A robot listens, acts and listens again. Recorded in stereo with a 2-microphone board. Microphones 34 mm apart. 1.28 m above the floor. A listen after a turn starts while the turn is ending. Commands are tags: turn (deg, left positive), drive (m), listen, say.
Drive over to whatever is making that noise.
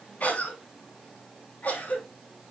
<turn deg="50"/>
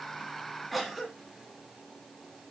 <drive m="1.0"/>
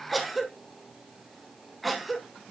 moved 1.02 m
<drive m="1.0"/>
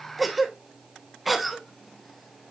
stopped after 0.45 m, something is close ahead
<say>I am next to the cough.</say>